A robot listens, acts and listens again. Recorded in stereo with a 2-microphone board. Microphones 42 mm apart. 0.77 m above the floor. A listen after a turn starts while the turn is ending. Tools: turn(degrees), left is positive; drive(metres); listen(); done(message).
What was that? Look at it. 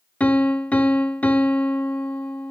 turn(degrees=35)
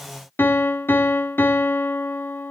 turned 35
turn(degrees=110)
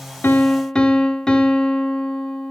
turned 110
turn(degrees=20)
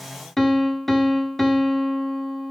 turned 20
done("Facing the piano, 1 to 2 m away.")